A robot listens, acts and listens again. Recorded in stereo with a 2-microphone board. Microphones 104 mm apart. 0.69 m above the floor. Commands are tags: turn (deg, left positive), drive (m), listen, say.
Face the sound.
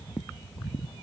<listen/>
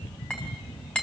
<turn deg="30"/>
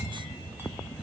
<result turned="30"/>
<listen/>
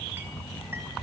<listen/>
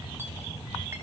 <say>I heard a clink, but can't make it out now. It was about 20° right or 140° left.</say>